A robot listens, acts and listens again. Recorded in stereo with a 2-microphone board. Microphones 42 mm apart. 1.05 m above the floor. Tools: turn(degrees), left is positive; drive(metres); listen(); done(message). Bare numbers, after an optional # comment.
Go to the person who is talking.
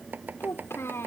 turn(90)
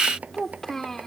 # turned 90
# So it is at 10° left.
turn(10)
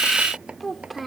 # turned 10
drive(1.0)
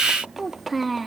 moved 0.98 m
drive(1.0)
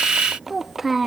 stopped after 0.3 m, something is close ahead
done("I am next to the child speaking.")